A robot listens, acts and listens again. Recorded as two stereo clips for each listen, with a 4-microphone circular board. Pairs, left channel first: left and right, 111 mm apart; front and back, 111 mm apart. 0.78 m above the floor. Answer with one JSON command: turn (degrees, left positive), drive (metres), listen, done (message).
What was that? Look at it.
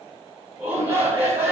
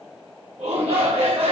{"turn": -160}
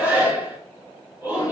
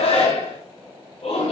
{"turn": -15}
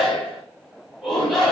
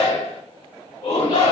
{"done": "Found it: a shout, straight ahead, over 4 m away."}